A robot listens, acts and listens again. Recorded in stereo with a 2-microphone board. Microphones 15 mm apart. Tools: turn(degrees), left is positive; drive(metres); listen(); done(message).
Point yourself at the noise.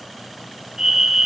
turn(degrees=-60)
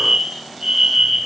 turn(degrees=-45)
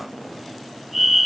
turn(degrees=-20)
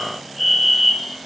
done("Found it: a fire alarm, straight ahead, 2 to 4 m away.")